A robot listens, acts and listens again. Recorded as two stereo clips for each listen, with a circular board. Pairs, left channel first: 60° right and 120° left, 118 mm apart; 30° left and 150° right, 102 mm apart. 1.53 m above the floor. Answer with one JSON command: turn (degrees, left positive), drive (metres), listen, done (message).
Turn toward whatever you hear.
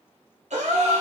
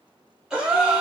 {"turn": 125}
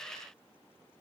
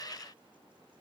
{"done": "Facing where the gasp came from. I can't hear it now."}